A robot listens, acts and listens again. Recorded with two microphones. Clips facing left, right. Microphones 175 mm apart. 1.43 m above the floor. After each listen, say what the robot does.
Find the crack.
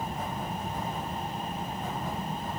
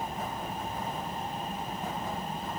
Keep listening.
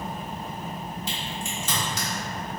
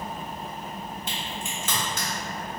Turn 60° right.
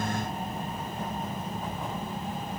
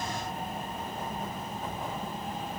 Keep listening.
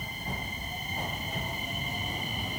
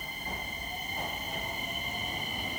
I heard a crack, but can't make it out now. It was about straight ahead or 60° right.